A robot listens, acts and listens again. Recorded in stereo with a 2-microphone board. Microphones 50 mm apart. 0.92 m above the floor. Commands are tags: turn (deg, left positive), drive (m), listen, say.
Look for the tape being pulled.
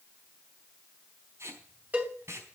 <turn deg="-65"/>
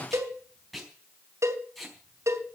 <say>Found it: tape being pulled, straight ahead.</say>